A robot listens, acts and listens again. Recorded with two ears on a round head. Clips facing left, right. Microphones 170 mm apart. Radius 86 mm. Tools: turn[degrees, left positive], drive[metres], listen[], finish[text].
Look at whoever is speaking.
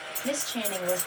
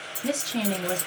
Thought: The woman speaking: about 65° right or 115° right.
Action: turn[-65]
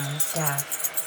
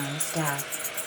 Thought: So it is at 15° right.
Action: turn[-15]
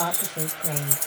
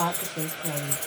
Action: finish[Facing the woman speaking.]